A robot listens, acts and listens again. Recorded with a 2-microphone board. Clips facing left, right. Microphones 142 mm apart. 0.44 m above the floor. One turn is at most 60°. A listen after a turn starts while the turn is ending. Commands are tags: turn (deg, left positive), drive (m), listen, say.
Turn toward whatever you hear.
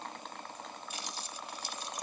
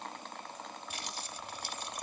<turn deg="-60"/>
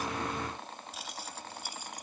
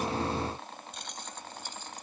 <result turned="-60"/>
<turn deg="15"/>
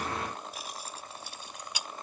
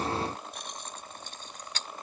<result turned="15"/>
<turn deg="10"/>
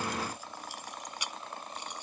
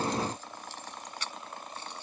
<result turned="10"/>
<turn deg="15"/>
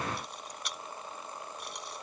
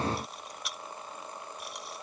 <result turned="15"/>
<say>Facing the keys jangling.</say>